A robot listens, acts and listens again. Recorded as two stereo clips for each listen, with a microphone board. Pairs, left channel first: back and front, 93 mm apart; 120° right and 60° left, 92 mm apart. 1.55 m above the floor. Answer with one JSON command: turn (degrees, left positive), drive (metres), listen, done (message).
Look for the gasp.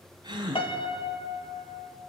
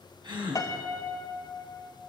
{"turn": 35}
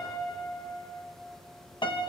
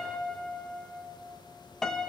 {"done": "I heard a gasp from this way, but can't make it out now."}